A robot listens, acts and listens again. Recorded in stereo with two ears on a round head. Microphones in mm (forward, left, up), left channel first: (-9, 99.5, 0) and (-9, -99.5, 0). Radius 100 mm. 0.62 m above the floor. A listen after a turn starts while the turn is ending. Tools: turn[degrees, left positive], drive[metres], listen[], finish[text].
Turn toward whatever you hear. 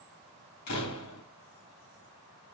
Action: turn[90]
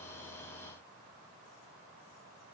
Action: finish[I heard a door slam from this way, but can't make it out now.]